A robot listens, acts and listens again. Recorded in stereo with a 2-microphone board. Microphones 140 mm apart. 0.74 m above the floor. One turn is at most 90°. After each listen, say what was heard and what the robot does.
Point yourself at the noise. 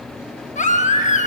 The baby crying: about 60° left or 120° left. Turn 60° left.
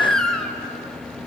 Facing the baby crying, under 1 m away.